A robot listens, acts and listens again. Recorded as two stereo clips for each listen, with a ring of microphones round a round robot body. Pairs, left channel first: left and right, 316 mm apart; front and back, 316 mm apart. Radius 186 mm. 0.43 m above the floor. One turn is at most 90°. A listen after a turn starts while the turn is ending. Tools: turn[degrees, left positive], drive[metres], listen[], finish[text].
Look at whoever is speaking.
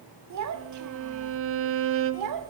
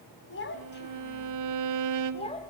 Thought: The child speaking: 75° right.
Action: turn[-75]
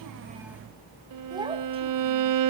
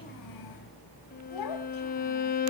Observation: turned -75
Thought: The child speaking is now 15° right.
Action: turn[-15]
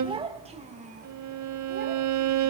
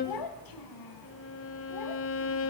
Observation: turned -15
Thought: The child speaking is now 25° right.
Action: turn[-25]
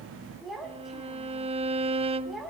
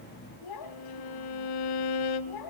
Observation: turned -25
Action: finish[Found it: a child speaking, straight ahead.]